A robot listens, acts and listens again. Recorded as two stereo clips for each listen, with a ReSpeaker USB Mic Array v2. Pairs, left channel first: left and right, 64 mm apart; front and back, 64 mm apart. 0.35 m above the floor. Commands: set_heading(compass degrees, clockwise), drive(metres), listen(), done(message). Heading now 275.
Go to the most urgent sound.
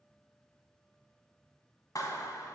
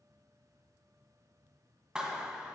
listen()
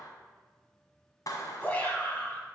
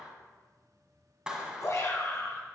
set_heading(250)
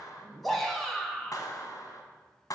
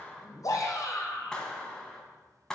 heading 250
drive(1.0)
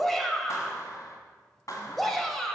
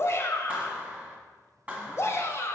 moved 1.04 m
drive(1.0)
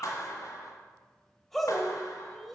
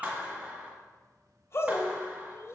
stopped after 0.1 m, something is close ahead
done("Arrived at the shout, straight ahead.")